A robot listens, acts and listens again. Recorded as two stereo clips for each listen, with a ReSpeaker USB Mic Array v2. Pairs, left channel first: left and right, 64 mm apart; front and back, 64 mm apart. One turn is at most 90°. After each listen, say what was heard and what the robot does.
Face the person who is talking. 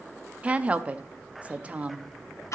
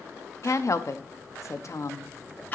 The woman speaking: 25° right. Turn 25° right.
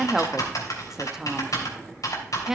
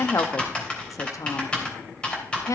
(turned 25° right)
The woman speaking is now 10° right. Turn 10° right.
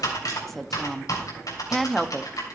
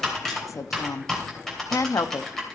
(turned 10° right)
Facing the woman speaking, under 1 m away.